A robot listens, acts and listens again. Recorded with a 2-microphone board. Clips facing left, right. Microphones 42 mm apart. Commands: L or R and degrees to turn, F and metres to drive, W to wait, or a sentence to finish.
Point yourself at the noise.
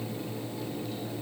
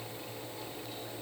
W
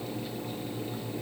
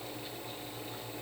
W
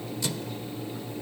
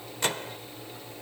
R50
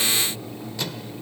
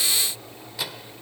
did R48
R10
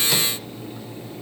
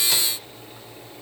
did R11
W
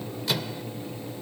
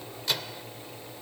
Found it: a microwave, straight ahead.